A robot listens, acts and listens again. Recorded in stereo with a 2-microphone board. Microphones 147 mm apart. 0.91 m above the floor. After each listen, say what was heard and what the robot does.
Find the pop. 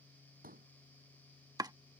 The pop: about 75° right or 105° right. Turn 75° right.
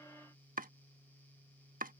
Keep listening.
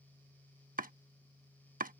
I heard a pop, but can't make it out now. It was about straight ahead or 30° right.